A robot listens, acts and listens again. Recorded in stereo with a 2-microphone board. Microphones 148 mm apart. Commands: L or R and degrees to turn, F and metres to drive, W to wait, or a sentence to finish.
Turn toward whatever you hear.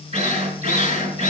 R45
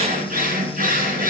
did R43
R90
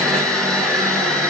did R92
Found it: a drill, straight ahead, over 4 m away.